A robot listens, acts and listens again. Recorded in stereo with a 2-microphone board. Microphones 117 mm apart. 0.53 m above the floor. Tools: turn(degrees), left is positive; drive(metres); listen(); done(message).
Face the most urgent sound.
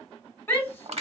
turn(degrees=20)
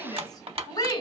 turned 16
turn(degrees=145)
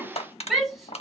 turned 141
done("Facing the shout.")